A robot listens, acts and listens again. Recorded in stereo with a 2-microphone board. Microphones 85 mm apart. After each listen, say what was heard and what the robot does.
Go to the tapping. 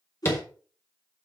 The tapping: about 30° left or 150° left. Turn 30° left.
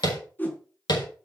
So it is at 120° left. Turn 120° left.
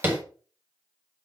The tapping is now 25° right. Turn 25° right.
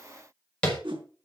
The tapping is now 10° left. Turn 10° left.
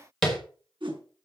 Drive 1.0 m forward.
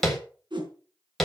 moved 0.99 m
Drive 1.0 m forward.
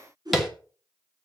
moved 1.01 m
Drive 1.0 m forward.
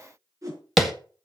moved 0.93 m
Drive 1.0 m forward.
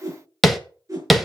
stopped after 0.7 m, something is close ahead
Arrived at the tapping, straight ahead.